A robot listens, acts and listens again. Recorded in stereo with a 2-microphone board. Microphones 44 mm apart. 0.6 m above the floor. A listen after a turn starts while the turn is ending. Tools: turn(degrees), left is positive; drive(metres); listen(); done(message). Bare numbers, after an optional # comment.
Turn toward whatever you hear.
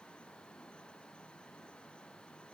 listen()
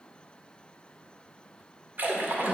# The splash: about 45° right or 135° right.
turn(-45)
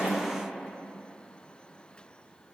listen()
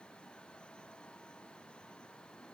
done("I heard a splash, but can't make it out now. It was about straight ahead or 90° right.")